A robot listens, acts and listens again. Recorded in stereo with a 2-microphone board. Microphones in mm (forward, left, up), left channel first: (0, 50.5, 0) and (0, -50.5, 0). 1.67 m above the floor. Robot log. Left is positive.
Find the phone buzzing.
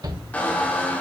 cmd idle
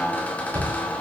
cmd idle
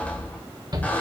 end: I can't make out a phone buzzing to turn to.